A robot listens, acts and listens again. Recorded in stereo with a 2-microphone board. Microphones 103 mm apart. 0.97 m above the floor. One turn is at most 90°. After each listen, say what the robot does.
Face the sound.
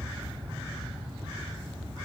Keep listening.
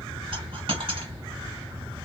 Turn 60° right.
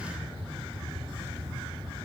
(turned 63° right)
Keep listening.
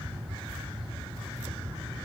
I heard a dropped coin, but can't make it out now. It was about 5° left or 60° right.